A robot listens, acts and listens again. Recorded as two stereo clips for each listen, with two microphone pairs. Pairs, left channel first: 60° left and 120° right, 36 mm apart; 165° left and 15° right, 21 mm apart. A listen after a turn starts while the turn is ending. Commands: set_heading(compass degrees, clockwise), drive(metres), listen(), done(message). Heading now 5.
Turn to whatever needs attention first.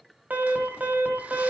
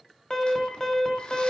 set_heading(140)
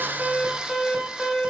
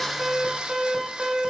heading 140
set_heading(160)
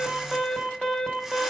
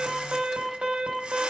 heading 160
done("Found it: an alarm, straight ahead, 1 to 2 m away.")